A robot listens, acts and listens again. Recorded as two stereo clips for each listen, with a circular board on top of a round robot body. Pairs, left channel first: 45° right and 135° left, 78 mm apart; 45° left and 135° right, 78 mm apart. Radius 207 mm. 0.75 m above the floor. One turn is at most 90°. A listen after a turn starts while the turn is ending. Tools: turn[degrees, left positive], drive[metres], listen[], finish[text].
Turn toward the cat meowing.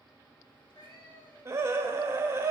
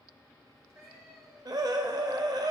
Thought: The cat meowing: 80° right.
Action: turn[-80]
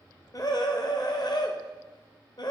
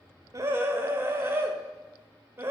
Action: listen[]
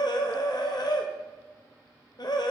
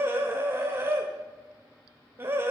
Action: listen[]
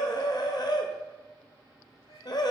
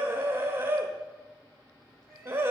Thought: The cat meowing is now 45° right.
Action: turn[-45]
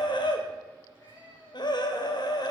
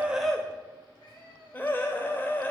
Thought: The cat meowing is now 10° left.
Action: turn[10]
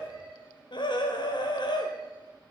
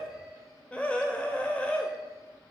Action: listen[]
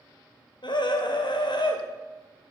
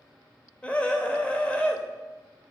Action: listen[]
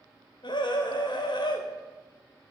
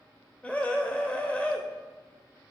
Action: finish[I heard a cat meowing from this way, but can't make it out now.]